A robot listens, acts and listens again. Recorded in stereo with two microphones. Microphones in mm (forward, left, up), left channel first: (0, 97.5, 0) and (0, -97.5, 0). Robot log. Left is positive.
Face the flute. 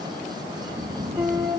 cmd yaw -30
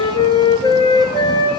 note: So it is at 25° left.
cmd yaw +25
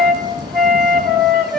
end: Found it: a flute, straight ahead.